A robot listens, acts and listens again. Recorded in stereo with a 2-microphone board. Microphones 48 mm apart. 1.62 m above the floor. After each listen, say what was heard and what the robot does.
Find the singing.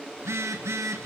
Keep listening.
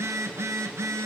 Keep listening.
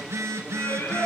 The singing: about 60° left or 120° left. Turn 60° left.
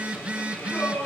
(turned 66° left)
So it is at 60° left. Turn 60° left.
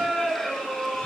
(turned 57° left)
Facing the singing.